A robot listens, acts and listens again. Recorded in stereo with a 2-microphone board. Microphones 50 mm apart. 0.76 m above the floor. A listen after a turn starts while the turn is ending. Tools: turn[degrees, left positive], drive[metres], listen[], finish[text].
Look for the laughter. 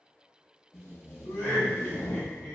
Thought: The laughter: about 45° left or 135° left.
Action: turn[45]
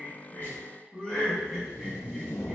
Thought: So it is at 15° left.
Action: turn[15]
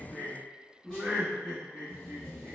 Thought: The laughter is now 35° right.
Action: turn[-35]
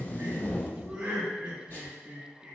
Thought: The laughter is now 15° right.
Action: turn[-15]
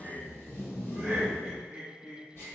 Thought: The laughter is now 10° right.
Action: turn[-10]
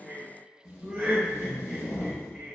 Action: finish[Facing the laughter.]